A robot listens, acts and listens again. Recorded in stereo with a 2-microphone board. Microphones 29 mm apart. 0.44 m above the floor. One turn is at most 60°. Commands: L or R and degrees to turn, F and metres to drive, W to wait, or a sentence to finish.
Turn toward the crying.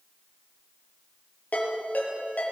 W
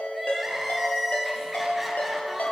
R30
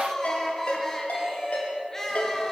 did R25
L15
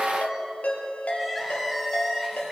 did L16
Facing the crying.